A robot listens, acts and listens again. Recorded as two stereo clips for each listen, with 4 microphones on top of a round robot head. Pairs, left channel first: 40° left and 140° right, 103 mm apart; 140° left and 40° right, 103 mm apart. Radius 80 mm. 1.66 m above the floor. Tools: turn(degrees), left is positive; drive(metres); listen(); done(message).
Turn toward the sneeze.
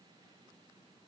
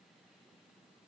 listen()
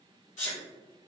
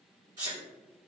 turn(degrees=20)
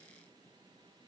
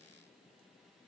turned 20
done("I heard a sneeze from this way, but can't make it out now.")